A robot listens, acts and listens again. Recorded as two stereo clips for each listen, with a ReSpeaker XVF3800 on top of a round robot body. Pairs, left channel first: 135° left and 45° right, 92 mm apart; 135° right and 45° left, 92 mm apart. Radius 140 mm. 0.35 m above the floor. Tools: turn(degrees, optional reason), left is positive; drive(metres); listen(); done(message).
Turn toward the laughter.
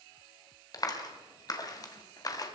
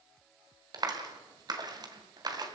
listen()
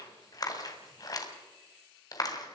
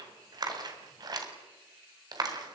listen()
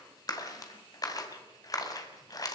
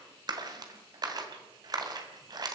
done("I can't make out laughter to turn to.")